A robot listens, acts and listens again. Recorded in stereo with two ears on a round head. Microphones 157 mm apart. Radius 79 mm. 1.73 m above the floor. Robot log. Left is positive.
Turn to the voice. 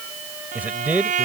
cmd yaw -30
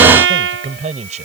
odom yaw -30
note: So it is at 140° right.
cmd yaw -140
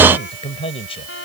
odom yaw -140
note: The man speaking is now 35° left.
cmd yaw +35
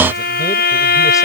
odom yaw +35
cmd idle
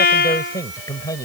note: The man speaking is now 20° left.
cmd yaw +20
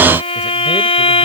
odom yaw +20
cmd idle
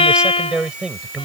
end: Facing the man speaking.